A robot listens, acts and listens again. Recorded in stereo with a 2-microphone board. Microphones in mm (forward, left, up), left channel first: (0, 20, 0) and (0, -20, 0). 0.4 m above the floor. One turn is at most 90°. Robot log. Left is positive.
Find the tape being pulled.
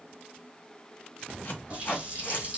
note: The tape being pulled: about 55° left or 125° left.
cmd yaw +55
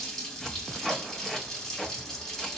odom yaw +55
note: So it is at 10° left.
cmd yaw +10
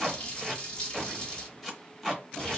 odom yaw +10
end: Found it: tape being pulled, straight ahead, under 1 m away.